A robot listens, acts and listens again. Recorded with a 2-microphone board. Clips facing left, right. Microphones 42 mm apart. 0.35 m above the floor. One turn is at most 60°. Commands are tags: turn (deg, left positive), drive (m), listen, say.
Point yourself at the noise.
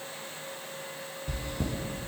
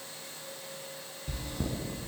<turn deg="30"/>
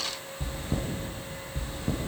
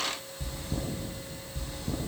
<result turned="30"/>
<turn deg="60"/>
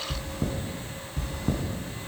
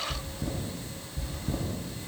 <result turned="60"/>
<turn deg="60"/>
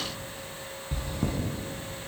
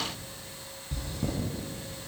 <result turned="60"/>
<turn deg="30"/>
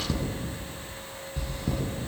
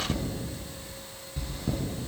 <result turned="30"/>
<say>Found it: chewing, straight ahead, 2 to 4 m away.</say>